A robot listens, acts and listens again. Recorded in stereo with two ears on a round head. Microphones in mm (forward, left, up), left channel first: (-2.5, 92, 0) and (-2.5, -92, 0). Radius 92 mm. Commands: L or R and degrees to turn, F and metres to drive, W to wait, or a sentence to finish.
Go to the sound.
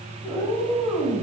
R30
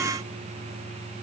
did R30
W
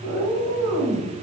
R145
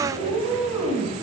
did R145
R10
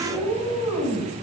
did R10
F1.0
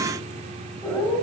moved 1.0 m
F1.0
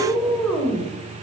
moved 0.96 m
F1.0
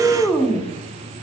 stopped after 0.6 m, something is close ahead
L10
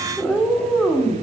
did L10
I am next to the cat meowing.